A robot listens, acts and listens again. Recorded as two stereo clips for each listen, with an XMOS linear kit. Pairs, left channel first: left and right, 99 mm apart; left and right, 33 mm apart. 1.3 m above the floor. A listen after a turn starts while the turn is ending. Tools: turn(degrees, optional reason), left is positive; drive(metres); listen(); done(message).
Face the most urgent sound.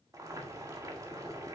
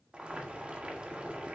listen()
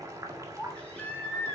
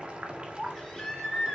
turn(degrees=30)
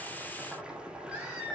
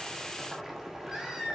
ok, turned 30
turn(degrees=-15, reason="So it is at 15° right.")
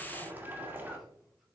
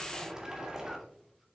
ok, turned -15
listen()
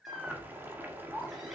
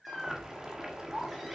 done("Facing the baby crying.")